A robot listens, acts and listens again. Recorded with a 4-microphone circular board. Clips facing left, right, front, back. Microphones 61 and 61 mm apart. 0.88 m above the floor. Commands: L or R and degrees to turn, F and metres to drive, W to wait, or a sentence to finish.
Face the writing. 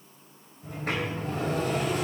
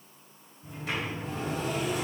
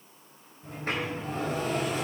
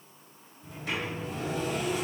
W
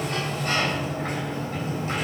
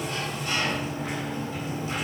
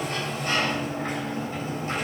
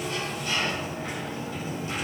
W
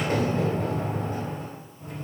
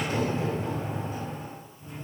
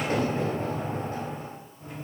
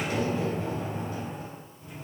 I can't make out writing, only a sliding door.